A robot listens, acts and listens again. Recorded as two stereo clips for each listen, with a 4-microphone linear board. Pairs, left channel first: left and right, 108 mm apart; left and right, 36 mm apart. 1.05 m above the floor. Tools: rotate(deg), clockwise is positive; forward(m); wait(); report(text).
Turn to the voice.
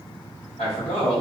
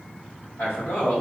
rotate(-75)
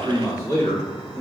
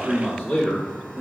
rotate(-40)
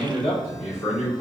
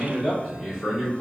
rotate(-15)
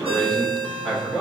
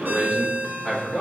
report("Facing the man speaking, 2 to 4 m away.")